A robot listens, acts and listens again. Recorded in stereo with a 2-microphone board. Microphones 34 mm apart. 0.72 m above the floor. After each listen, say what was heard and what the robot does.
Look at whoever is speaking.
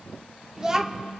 The child speaking: about 20° right or 160° right. Turn 20° right.
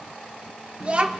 So it is at 145° right. Turn 145° right.
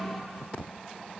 Facing the child speaking.